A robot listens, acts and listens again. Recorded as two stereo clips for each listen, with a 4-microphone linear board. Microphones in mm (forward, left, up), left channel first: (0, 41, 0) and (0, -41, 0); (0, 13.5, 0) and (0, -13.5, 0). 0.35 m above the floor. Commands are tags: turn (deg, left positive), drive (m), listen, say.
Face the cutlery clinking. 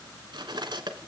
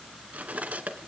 <turn deg="-65"/>
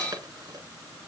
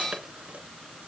<listen/>
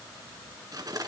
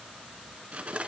<turn deg="-50"/>
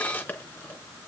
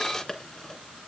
<turn deg="20"/>
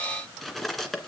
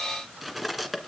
<say>Facing the cutlery clinking, 2 to 4 m away.</say>